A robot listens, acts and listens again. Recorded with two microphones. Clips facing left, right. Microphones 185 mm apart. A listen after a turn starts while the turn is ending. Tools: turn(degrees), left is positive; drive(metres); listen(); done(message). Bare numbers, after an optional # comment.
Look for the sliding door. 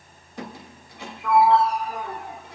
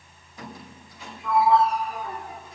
# The sliding door: about 60° left or 120° left.
turn(60)
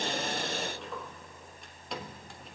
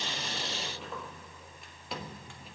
done("Found it: a sliding door, straight ahead.")